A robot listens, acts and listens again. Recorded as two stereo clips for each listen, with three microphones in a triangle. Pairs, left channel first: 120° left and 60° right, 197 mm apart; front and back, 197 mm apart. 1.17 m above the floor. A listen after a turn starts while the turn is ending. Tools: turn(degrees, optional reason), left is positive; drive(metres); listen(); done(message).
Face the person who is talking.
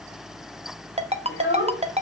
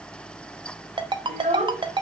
turn(degrees=125, reason="The child speaking: 125° left.")
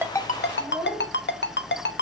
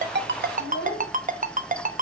turn(degrees=25, reason="The child speaking is now 25° left.")
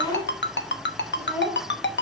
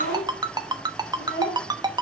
turn(degrees=20, reason="The child speaking is now 20° left.")
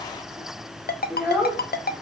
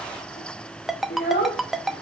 turn(degrees=20, reason="The child speaking is now 20° left.")
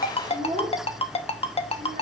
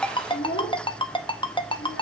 done("Found it: a child speaking, straight ahead, 1 to 2 m away.")